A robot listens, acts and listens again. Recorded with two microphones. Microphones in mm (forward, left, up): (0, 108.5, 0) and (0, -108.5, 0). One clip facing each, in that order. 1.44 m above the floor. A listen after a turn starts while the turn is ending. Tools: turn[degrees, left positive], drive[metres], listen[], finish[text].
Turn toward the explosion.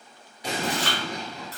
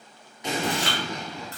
Thought: The explosion: about 35° left or 145° left.
Action: turn[35]
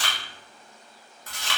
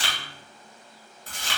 Action: listen[]
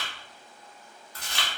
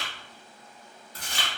Action: finish[I heard an explosion, but can't make it out now. It was about straight ahead or 110° left.]